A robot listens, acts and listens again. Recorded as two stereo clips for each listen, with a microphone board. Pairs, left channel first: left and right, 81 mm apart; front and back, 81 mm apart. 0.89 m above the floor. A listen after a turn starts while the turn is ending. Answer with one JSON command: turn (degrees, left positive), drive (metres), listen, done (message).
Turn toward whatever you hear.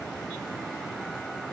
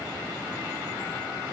{"listen": true}
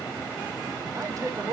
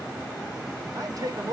{"turn": -135}
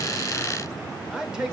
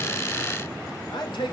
{"turn": -10}
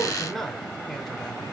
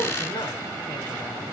{"done": "Found it: a man speaking, straight ahead, 2 to 4 m away."}